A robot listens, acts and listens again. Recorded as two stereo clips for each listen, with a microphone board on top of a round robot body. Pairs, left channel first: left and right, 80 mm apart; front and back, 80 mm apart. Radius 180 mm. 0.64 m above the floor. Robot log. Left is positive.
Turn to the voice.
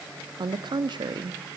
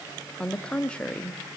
note: The woman speaking: 75° right.
cmd yaw -75
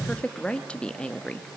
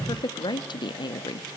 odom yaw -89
note: The woman speaking is now 15° left.
cmd yaw +15
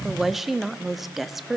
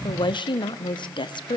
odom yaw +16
end: Found it: a woman speaking, straight ahead, 1 to 2 m away.